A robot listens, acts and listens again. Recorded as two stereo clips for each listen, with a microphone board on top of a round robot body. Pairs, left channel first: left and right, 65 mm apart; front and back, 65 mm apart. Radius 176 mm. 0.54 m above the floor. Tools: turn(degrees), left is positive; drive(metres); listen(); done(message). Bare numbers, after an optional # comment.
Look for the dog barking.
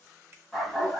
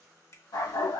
done("Found it: a dog barking, straight ahead, 1 to 2 m away.")